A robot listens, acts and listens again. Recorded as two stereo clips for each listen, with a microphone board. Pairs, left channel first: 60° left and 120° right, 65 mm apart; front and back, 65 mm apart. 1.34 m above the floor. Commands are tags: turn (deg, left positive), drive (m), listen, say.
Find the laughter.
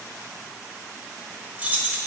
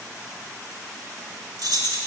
<listen/>
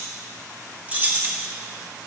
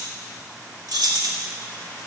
<listen/>
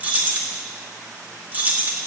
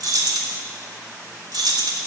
<say>I can't make out laughter to turn to.</say>